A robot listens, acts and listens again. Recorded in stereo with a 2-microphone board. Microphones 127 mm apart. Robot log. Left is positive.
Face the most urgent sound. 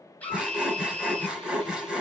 cmd yaw +30
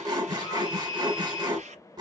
note: So it is at 135° left.
cmd yaw +135
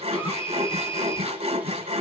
note: The scream is now 55° left.
cmd yaw +55
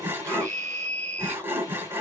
note: The scream is now 15° left.
cmd yaw +15
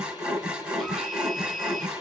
end: Found it: a scream, straight ahead, 1 to 2 m away.